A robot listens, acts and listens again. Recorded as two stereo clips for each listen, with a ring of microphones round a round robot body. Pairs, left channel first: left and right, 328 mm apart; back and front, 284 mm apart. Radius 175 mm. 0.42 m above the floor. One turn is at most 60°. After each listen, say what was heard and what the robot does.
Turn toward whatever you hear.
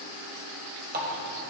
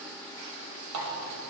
The running tap: 30° right. Turn 30° right.
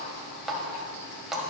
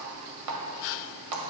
Found it: a running tap, straight ahead.